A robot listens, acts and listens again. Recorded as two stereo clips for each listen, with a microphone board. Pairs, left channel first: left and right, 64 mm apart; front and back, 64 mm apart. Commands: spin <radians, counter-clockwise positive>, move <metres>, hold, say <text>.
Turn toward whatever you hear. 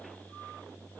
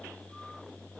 hold
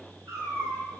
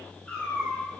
spin -1.31
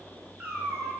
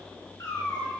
spin -0.26
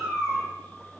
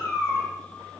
say Found it: a cat meowing, straight ahead, 1 to 2 m away.